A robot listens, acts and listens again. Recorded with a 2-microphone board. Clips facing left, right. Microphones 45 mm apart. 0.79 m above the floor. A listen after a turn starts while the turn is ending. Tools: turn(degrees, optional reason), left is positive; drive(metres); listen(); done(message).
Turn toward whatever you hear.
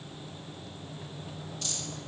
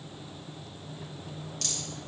turn(degrees=-90)
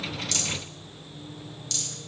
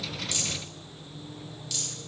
turn(degrees=-10, reason="So it is at 10° right.")
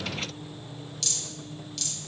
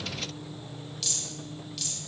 done("Facing the rattle.")